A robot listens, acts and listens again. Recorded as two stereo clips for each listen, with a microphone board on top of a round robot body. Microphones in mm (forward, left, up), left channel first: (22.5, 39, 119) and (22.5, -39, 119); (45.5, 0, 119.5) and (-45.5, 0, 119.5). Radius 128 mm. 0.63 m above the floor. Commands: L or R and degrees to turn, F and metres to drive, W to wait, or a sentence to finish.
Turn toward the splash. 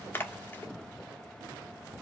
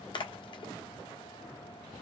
L25
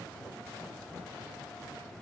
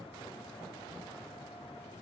Facing where the splash came from. I can't hear it now.